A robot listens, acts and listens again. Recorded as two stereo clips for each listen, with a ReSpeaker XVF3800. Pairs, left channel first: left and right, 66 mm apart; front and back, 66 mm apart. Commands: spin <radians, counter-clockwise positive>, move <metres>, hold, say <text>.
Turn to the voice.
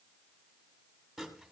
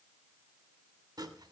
hold
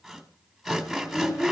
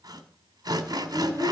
spin 2.36
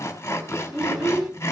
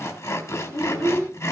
say Facing the child speaking, over 4 m away.